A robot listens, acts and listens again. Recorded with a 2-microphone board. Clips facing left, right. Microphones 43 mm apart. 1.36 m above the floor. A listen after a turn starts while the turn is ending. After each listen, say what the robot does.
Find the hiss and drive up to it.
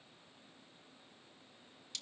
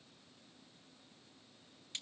Keep listening.
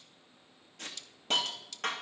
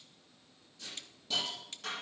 Turn 60° left.
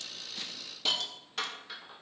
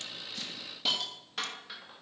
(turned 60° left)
Drive 1.0 m forward.
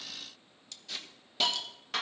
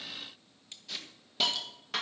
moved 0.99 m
Drive 1.0 m forward.
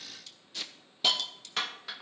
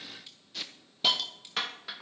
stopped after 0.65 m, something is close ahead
I am next to the hiss.